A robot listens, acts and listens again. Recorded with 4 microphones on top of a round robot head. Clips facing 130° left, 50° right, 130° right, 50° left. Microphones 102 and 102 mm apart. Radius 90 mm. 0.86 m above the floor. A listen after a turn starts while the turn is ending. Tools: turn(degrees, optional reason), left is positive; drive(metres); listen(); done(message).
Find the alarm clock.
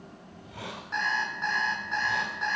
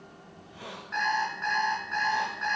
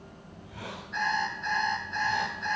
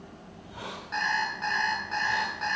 turn(degrees=65, reason="The alarm clock: 65° left.")
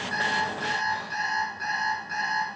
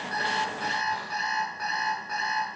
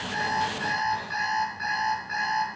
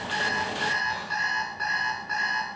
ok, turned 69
done("Facing the alarm clock, over 4 m away.")